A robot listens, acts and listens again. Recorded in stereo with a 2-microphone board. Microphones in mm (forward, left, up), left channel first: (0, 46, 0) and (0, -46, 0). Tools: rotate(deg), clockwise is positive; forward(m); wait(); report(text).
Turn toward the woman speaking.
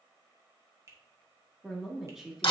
rotate(30)
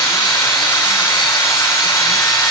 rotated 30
wait()
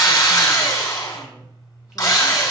wait()
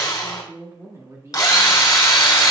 rotate(145)
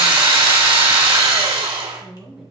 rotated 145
report("Facing the woman speaking, 2 to 4 m away.")